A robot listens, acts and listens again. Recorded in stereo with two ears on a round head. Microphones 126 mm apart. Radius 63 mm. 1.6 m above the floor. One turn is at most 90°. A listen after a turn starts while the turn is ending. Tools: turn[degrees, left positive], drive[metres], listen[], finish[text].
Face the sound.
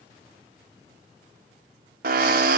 Thought: The drill: about 75° right or 105° right.
Action: turn[-75]
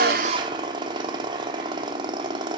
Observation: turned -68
Thought: So it is at 35° right.
Action: turn[-35]
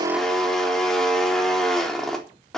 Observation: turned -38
Action: finish[Facing the drill, 2 to 4 m away.]